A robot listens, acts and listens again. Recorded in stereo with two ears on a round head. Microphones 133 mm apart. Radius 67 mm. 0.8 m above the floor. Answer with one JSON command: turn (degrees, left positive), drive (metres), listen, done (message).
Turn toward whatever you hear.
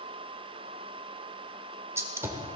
{"turn": -20}
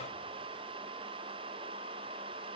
{"listen": true}
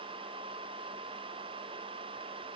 {"done": "I heard a gunshot, but can't make it out now. It was about straight ahead or 140° right."}